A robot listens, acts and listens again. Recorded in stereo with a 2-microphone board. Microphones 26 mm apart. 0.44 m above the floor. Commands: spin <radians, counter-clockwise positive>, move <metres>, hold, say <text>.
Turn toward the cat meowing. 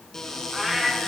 spin -0.52
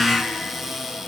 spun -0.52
hold
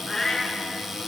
spin 0.26
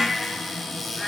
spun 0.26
say Facing the cat meowing.